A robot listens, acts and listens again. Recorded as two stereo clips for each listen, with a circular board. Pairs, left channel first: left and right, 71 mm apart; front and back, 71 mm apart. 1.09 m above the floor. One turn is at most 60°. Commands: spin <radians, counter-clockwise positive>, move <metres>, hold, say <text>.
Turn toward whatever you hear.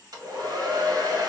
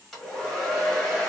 spin -1.05
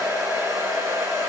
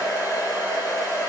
spin -0.61
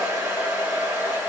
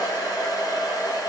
spin -0.35
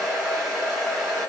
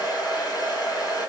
say Found it: a hair dryer, straight ahead.